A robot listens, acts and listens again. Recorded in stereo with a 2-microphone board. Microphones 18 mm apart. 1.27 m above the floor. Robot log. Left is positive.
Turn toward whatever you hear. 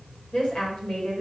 cmd yaw +90
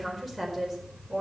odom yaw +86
end: Found it: a woman speaking, straight ahead.